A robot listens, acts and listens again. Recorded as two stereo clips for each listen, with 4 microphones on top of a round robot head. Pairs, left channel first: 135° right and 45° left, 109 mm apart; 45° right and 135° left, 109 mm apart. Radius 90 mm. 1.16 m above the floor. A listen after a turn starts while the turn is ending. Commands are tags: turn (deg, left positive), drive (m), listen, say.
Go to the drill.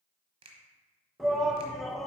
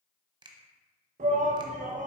<listen/>
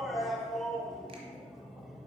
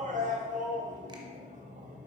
<listen/>
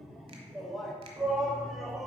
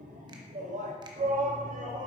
<say>I can't make out a drill to turn to.</say>